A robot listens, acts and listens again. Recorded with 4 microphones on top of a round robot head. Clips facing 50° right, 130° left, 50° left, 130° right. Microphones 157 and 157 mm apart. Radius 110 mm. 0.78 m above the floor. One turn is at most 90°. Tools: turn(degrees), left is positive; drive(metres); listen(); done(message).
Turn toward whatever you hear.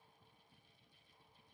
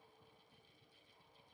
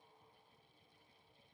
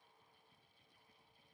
listen()
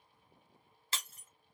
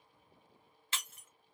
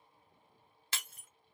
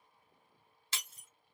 done("Facing the breaking glass.")